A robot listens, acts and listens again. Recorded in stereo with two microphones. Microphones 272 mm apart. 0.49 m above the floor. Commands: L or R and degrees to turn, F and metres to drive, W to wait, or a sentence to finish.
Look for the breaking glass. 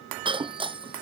R20
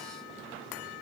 W
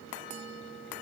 I heard breaking glass, but can't make it out now. It was about straight ahead or 140° right.